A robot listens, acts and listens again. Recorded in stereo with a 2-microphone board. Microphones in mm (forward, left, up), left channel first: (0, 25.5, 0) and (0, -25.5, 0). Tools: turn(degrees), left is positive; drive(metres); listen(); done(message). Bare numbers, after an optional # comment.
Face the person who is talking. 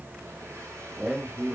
# The man speaking: about 20° right or 160° right.
turn(-20)
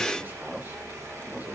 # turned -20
listen()
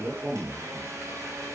# So it is at 140° right.
turn(-140)
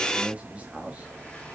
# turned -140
# The man speaking is now 30° right.
turn(-30)
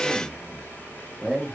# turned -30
# The man speaking is now 10° right.
turn(-10)
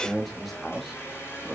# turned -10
done("Found it: a man speaking, straight ahead, over 4 m away.")